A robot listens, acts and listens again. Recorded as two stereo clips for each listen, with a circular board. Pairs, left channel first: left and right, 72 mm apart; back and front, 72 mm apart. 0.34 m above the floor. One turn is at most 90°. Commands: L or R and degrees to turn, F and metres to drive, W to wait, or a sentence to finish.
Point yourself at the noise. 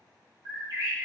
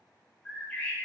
R90
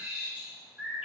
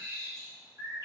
R20
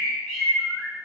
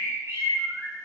Facing the bird, 1 to 2 m away.